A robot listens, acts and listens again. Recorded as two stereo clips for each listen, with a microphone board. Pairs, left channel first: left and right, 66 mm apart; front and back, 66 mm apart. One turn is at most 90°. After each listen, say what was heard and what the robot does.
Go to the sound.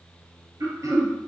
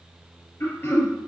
The throat clearing: 55° right. Turn 55° right.
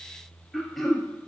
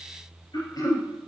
Drive 1.0 m forward.
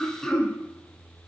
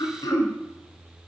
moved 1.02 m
The throat clearing is now 10° left. Turn 10° left.
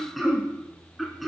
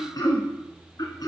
Drive 1.0 m forward.
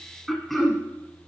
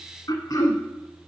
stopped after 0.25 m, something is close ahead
Arrived at the throat clearing, straight ahead.